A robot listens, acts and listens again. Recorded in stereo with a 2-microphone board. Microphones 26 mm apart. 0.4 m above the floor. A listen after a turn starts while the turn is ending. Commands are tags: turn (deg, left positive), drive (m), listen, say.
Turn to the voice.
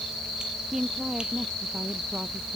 <turn deg="-20"/>
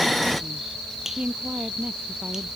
<turn deg="-140"/>
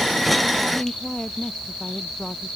<turn deg="40"/>
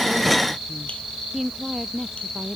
<turn deg="-10"/>
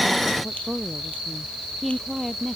<say>Found it: a woman speaking, straight ahead.</say>